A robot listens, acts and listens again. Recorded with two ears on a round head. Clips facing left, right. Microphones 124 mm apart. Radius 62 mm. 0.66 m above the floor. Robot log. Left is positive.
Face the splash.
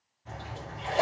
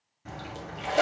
cmd yaw -90
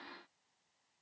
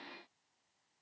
end: I heard a splash from this way, but can't make it out now.